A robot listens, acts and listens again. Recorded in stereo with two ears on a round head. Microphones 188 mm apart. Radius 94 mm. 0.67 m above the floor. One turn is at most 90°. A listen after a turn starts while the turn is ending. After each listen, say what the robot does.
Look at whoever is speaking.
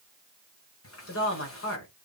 Turn 65° left.
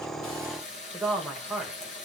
Facing the woman speaking, 2 to 4 m away.